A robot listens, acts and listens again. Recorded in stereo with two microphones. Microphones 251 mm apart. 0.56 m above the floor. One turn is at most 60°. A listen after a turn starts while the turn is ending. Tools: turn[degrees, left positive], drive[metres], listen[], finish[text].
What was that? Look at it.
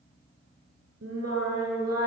Action: turn[-60]
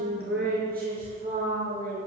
Thought: So it is at 35° right.
Action: turn[-35]
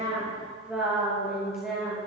Action: finish[Facing the singing.]